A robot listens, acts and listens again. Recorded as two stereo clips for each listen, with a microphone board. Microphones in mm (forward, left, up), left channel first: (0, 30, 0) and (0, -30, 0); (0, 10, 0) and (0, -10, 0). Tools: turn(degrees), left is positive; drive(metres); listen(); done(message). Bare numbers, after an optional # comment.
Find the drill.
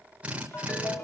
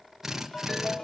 # The drill: about 20° right or 160° right.
turn(-20)
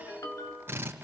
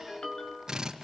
# So it is at 140° right.
turn(-140)
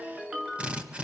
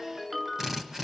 # The drill is now 20° right.
turn(-20)
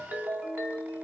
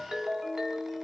listen()
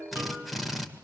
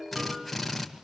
done("Facing the drill, 2 to 4 m away.")